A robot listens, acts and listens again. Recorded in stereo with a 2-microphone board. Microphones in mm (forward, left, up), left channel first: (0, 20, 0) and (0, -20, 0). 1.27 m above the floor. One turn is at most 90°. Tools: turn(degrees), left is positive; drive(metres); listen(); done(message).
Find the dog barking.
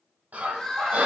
turn(degrees=-35)
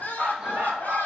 turn(degrees=-90)
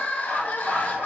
turn(degrees=-50)
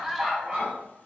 turn(degrees=-15)
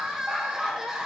done("Found it: a dog barking, straight ahead.")